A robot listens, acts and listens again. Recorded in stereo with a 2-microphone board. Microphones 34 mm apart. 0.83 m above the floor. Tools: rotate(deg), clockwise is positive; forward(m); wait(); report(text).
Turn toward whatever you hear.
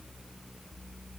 wait()
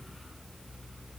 wait()
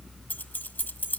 rotate(-60)
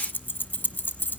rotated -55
rotate(-65)
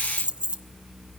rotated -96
rotate(30)
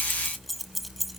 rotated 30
report("Facing the keys jangling.")